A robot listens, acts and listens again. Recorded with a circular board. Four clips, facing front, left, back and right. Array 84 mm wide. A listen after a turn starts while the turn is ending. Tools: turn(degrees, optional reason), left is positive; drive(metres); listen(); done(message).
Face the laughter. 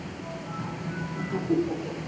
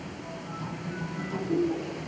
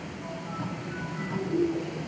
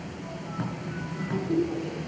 turn(degrees=-10, reason="The laughter: 10° right.")
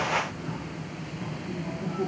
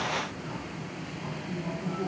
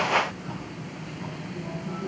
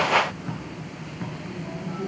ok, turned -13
listen()
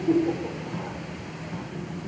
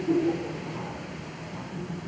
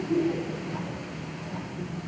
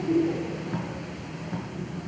done("Facing the laughter.")